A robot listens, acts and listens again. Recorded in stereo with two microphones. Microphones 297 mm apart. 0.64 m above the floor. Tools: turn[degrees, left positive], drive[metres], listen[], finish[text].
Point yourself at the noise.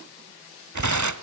Action: turn[-90]
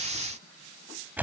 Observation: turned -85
Action: finish[Facing the tearing paper.]